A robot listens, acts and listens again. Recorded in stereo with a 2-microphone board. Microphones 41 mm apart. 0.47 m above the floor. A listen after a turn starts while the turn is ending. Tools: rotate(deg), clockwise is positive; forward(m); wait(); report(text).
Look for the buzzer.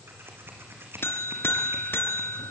rotate(-70)
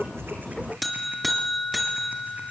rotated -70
report("Facing the buzzer, 2 to 4 m away.")